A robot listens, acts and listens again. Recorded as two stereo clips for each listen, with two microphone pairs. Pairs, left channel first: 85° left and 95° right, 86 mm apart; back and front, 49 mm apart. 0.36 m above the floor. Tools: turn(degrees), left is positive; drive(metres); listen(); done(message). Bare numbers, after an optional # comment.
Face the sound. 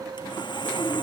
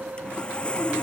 # The sawing: 115° left.
turn(115)
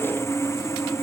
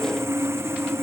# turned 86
# The sawing is now 25° left.
turn(25)
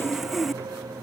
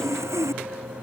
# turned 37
# The sawing is now 10° right.
turn(-10)
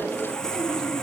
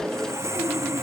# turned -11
done("Facing the sawing.")